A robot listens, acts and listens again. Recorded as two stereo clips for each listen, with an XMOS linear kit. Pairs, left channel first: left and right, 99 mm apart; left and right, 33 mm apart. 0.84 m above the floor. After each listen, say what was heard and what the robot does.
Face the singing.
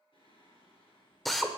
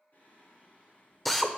The singing: about 60° left or 120° left. Turn 60° left.
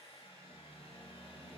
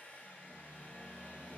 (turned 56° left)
So it is at 15° left. Turn 15° left.
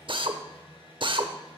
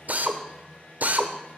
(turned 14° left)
Facing the singing.